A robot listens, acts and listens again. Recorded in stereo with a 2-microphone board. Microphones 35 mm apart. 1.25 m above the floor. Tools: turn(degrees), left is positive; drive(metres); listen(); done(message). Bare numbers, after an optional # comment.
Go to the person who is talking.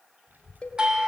# The child speaking: about 50° right or 130° right.
turn(-50)
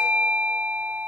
listen()
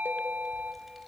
listen()
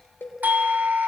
drive(1.0)
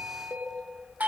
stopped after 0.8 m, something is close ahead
done("Blocked. The child speaking is further on, straight ahead.")